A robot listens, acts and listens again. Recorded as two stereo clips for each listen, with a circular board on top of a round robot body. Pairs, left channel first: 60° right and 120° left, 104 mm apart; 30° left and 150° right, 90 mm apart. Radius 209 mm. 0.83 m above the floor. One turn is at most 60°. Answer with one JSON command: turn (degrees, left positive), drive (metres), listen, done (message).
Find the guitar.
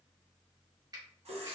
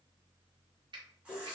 {"listen": true}
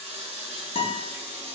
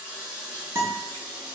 {"turn": -60}
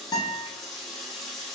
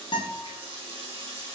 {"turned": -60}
{"done": "Found it: a guitar, straight ahead."}